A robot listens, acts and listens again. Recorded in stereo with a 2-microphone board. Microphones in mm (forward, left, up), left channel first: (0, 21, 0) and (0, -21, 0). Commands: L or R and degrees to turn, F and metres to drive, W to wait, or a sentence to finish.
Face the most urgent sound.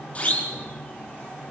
L35
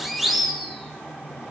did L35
Facing the siren, over 4 m away.